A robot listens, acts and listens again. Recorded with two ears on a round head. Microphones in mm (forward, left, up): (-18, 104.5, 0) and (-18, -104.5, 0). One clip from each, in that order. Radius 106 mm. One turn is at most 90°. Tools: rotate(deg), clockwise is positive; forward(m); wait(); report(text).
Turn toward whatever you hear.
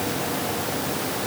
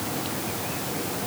wait()
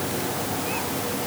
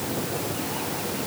wait()
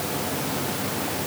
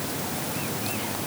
report("I can't make out anything.")